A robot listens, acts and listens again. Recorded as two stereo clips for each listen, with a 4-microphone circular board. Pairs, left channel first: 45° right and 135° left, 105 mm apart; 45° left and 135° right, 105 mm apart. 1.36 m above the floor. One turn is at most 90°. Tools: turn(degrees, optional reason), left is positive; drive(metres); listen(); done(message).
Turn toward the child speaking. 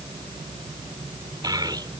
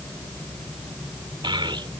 turn(degrees=-90, reason="The child speaking: 175° right.")
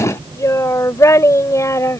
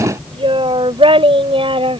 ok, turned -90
turn(degrees=-90, reason="The child speaking is now 105° right.")
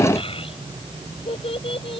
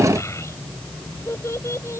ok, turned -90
turn(degrees=-20, reason="The child speaking is now 20° right.")
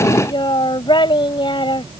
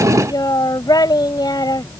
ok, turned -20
done("Found it: a child speaking, straight ahead.")